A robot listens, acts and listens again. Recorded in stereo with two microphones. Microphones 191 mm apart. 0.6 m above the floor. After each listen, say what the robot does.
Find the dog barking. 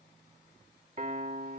Keep listening.
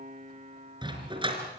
Turn 30° right.
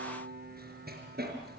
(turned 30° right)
Turn 115° right.
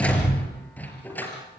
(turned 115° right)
Turn 10° left.
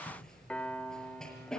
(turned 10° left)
Facing the dog barking, over 4 m away.